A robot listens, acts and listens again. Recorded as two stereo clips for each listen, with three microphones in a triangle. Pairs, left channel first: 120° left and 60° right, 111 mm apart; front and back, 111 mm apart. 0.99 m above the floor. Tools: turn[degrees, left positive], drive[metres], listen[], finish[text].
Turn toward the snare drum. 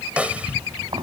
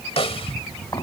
Thought: The snare drum: 15° left.
Action: turn[15]
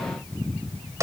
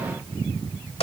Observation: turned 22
Action: finish[Facing the snare drum.]